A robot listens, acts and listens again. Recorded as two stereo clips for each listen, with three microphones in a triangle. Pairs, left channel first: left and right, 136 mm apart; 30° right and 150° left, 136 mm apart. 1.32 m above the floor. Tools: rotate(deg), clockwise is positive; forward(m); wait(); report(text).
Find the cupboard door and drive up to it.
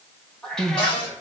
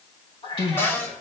rotate(-40)
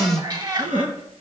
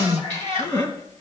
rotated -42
wait()
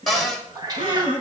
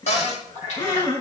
forward(1.0)
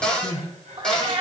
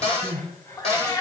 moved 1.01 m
forward(1.0)
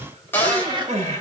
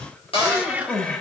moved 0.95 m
rotate(-15)
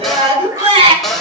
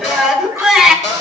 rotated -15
forward(1.0)
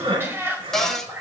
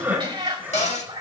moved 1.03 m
forward(1.0)
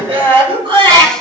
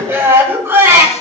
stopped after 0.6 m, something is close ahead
wait()
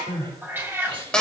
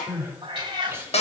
report("Arrived at the cupboard door, straight ahead.")